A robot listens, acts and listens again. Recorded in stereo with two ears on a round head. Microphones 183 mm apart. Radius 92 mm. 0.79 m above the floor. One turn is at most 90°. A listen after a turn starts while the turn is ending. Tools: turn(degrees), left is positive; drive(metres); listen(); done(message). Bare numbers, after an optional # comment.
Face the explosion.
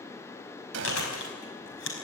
# The explosion: about 60° right or 120° right.
turn(-60)
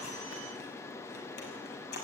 listen()
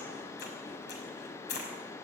done("I heard an explosion, but can't make it out now. It was about straight ahead or 60° right.")